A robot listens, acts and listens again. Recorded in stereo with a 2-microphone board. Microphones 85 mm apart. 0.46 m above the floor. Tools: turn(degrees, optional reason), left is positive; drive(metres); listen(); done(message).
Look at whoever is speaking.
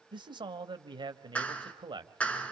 turn(degrees=-65, reason="The man speaking: about 65° right or 115° right.")
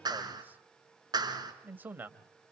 turn(degrees=-25, reason="So it is at 25° right.")
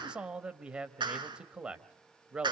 turn(degrees=-10, reason="The man speaking is now 10° right.")
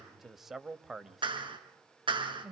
done("Facing the man speaking.")